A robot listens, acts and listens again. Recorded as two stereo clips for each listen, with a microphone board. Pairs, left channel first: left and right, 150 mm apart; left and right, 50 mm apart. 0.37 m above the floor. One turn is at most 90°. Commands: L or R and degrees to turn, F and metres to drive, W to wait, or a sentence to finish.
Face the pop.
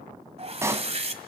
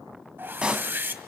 R20
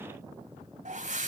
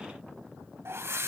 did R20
W
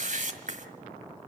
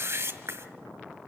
I heard a pop, but can't make it out now. It was about straight ahead or 140° right.